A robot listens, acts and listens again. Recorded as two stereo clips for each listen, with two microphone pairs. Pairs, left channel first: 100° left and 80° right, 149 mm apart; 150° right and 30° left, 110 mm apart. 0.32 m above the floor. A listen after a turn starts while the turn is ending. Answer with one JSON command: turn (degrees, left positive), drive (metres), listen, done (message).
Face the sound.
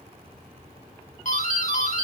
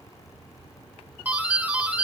{"turn": 100}
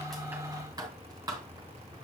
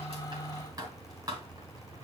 {"turn": -20}
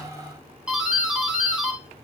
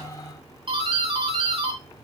{"done": "Found it: a doorbell, straight ahead."}